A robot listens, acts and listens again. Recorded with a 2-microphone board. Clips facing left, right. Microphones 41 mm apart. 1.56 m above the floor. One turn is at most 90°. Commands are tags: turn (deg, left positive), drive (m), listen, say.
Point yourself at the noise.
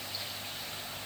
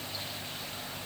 <listen/>
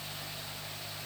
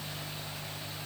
<listen/>
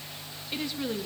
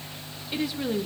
<turn deg="-30"/>
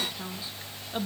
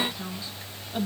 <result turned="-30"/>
<turn deg="10"/>
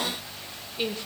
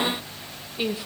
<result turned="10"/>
<say>Facing the woman speaking.</say>